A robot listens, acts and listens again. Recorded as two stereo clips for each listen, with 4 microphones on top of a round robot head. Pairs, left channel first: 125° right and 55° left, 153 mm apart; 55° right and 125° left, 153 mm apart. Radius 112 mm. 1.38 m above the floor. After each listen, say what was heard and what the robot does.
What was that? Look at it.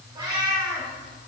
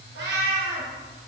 The cat meowing: 120° left. Turn 120° left.
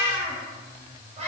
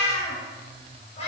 Found it: a cat meowing, straight ahead, over 4 m away.